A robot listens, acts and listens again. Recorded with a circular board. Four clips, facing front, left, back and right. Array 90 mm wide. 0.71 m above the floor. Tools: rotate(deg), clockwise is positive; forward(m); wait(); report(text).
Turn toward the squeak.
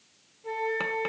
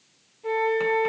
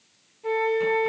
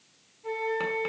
wait()
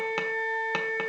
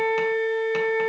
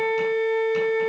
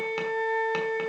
wait()
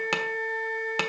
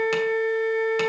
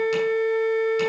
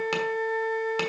report("I can't make out a squeak, only a flute.")